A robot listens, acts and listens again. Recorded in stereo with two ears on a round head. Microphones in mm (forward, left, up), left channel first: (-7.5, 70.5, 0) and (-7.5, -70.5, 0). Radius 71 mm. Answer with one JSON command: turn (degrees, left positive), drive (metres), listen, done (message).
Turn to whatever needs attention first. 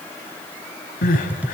{"turn": 55}
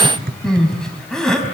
{"done": "Found it: crying, straight ahead."}